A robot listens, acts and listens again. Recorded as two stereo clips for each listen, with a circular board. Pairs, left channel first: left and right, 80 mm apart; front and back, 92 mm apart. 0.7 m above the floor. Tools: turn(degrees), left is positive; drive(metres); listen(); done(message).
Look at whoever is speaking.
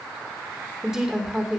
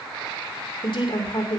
done("Facing the woman speaking, 2 to 4 m away.")